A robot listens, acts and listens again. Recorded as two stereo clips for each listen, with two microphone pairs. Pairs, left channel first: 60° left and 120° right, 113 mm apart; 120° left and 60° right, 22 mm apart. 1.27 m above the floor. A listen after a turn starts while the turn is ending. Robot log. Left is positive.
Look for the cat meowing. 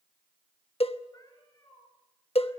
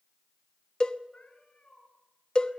note: The cat meowing: 120° left.
cmd yaw +120
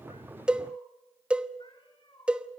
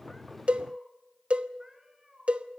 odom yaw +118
note: The cat meowing is now 15° left.
cmd yaw +15
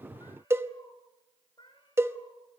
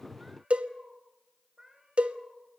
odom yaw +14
note: The cat meowing is now 15° left.
cmd yaw +15
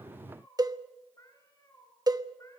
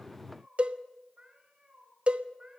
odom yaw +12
end: Found it: a cat meowing, straight ahead, 2 to 4 m away.